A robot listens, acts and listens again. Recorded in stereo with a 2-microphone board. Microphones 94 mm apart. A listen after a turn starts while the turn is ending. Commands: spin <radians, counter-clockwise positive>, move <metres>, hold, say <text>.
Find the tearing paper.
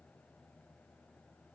hold
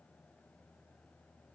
hold
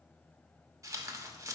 spin -0.61
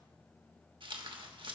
spin -1.83
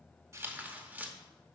spin -0.35
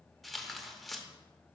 say Facing the tearing paper.